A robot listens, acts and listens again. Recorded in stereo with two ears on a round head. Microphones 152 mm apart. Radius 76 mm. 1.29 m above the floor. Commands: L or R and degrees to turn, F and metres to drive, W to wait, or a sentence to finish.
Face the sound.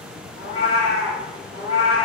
L30
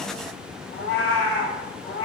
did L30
L125
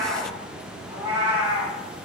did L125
R30
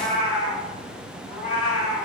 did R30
Found it: a cat meowing, straight ahead.